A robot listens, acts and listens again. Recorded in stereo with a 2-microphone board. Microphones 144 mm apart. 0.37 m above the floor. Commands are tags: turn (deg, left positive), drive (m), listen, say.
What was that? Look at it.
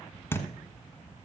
<turn deg="15"/>
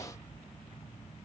<listen/>
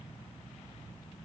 <say>I heard a thud, but can't make it out now. It was about straight ahead or 150° left.</say>